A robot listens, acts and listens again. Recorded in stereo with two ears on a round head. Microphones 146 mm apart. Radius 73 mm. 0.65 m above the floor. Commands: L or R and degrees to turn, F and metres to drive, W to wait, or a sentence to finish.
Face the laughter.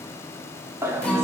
R15
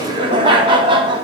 R150
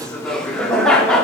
Facing the laughter, 1 to 2 m away.